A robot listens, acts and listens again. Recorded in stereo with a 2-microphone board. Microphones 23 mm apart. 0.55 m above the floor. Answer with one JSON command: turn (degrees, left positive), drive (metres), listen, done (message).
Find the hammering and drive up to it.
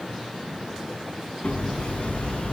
{"turn": 90}
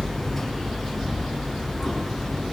{"drive": 1.0}
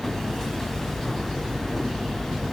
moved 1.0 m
{"turn": 10}
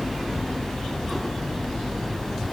{"drive": 1.0}
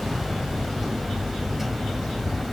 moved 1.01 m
{"turn": -10}
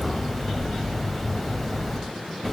{"drive": 1.0}
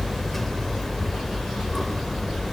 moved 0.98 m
{"turn": 10}
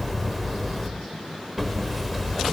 {"drive": 1.0}
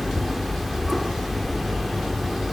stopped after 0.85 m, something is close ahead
{"done": "I am next to the hammering."}